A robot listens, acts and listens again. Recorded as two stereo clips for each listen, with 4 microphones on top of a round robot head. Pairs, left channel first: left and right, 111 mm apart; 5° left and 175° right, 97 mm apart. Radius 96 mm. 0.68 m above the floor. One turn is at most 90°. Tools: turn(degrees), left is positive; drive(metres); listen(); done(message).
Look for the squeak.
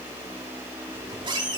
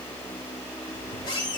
turn(degrees=-45)
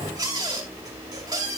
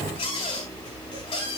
turn(degrees=-35)
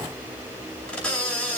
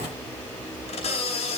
turn(degrees=10)
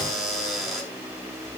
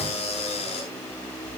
done("Facing the squeak, over 4 m away.")